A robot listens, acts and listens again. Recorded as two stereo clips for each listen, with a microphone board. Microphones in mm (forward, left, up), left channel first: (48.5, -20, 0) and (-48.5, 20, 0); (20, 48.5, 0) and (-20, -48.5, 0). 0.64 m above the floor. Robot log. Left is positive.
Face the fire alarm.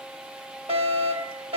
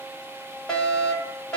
note: The fire alarm: 150° left.
cmd yaw +150
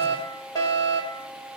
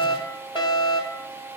note: The fire alarm is now 30° left.
cmd yaw +30
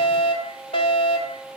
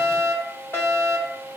end: Facing the fire alarm.